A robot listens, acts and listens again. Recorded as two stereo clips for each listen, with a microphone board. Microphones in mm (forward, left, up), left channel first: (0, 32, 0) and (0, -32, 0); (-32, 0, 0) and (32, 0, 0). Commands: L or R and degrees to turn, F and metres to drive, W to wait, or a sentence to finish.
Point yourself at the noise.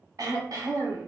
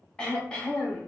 R105
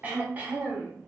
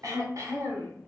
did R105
R30
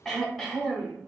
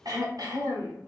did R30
Found it: throat clearing, straight ahead, 1 to 2 m away.